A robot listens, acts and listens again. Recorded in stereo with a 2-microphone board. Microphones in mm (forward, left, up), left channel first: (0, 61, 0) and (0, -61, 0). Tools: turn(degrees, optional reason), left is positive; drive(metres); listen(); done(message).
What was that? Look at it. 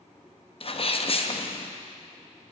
turn(degrees=50, reason="The sneeze: about 50° left or 130° left.")
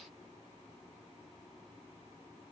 listen()
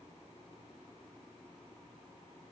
done("I heard a sneeze, but can't make it out now. It was about straight ahead or 80° left.")